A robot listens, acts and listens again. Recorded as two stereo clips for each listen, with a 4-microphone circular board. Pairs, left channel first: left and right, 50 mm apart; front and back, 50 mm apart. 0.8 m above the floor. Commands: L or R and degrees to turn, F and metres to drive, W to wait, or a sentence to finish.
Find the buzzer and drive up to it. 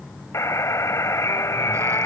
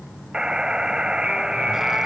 L105
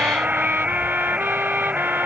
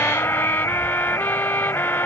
R20
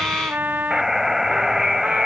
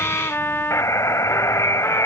F1.0
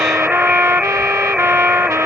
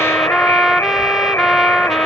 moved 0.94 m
R15
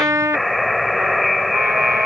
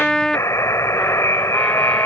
F1.0
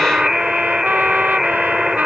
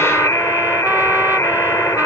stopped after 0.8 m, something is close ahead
Something is in my way. I am facing the buzzer but have not reached it.